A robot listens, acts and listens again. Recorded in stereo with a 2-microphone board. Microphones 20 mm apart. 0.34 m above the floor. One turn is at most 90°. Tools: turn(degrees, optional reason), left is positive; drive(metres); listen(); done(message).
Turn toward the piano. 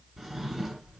listen()
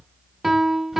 turn(degrees=-15, reason="The piano: about 15° right or 165° right.")
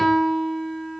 done("Found it: a piano, straight ahead, under 1 m away.")